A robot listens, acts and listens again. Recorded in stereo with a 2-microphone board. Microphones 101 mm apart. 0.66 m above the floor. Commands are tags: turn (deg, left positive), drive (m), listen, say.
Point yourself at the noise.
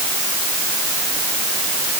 <listen/>
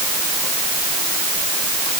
<listen/>
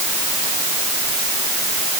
<say>I can't make out anything.</say>